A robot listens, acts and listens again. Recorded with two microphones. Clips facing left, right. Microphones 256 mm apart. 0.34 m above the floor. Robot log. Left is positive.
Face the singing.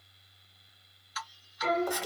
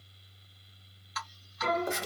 note: The singing: about 65° right or 115° right.
cmd yaw -65
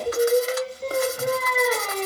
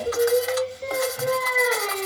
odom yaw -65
end: Facing the singing, 2 to 4 m away.